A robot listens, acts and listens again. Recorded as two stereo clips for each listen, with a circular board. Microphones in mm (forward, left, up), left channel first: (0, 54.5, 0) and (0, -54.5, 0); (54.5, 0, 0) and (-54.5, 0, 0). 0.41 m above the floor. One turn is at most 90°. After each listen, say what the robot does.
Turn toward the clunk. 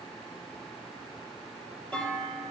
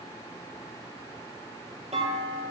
Turn 90° left.
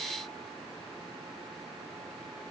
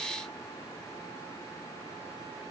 Turn 80° left.
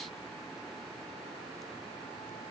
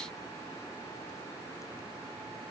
I heard a clunk from this way, but can't make it out now.